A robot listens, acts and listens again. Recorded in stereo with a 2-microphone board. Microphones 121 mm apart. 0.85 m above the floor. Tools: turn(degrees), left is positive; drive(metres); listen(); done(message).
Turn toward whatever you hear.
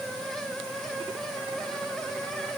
listen()
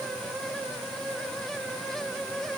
listen()
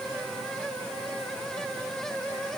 done("I can't make out anything to turn to.")